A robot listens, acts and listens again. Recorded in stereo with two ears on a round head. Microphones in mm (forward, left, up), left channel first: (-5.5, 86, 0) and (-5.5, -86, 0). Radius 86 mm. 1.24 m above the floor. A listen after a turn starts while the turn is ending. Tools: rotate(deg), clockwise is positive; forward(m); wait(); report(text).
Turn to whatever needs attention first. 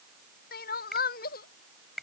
rotate(-50)
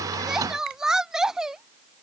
report("Found it: crying, straight ahead.")